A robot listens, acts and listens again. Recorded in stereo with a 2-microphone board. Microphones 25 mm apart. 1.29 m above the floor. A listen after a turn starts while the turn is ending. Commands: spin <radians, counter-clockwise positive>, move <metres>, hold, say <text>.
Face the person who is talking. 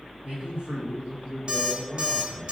spin -1.57
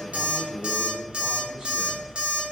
spin -0.26
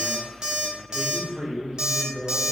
spin -0.52
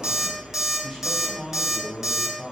spin -0.17
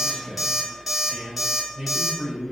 say Facing the man speaking.